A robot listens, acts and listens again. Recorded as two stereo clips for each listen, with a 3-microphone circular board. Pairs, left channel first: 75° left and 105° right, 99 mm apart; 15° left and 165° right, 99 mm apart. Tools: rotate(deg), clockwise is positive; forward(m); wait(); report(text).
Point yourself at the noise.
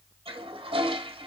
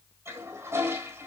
rotate(105)
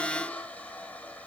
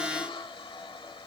report("Found it: a toilet flushing, straight ahead, 1 to 2 m away.")